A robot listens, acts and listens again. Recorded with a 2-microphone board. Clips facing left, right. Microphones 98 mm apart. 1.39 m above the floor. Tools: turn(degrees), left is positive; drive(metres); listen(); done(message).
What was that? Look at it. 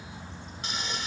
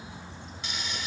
turn(degrees=40)
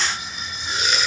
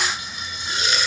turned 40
done("Found it: frying, straight ahead, 2 to 4 m away.")